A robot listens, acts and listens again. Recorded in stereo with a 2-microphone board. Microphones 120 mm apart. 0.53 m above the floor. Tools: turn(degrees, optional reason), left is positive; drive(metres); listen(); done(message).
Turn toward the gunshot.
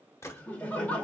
turn(degrees=25, reason="The gunshot: about 25° left or 155° left.")
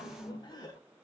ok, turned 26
listen()
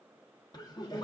done("I heard a gunshot, but can't make it out now. It was about straight ahead or 130° left.")